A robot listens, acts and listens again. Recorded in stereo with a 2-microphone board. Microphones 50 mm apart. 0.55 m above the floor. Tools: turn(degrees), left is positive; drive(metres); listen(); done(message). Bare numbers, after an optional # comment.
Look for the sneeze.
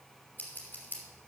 listen()
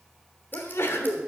# The sneeze: about 50° left or 130° left.
turn(50)
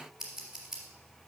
listen()
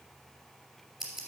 done("I heard a sneeze, but can't make it out now. It was about straight ahead or 80° left.")